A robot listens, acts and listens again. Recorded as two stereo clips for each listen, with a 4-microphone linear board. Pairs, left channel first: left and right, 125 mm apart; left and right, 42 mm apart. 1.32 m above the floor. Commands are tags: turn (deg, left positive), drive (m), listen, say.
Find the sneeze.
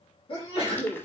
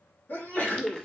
<turn deg="45"/>
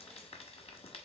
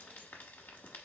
<listen/>
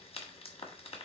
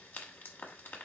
<say>I heard a sneeze, but can't make it out now. It was about straight ahead or 90° left.</say>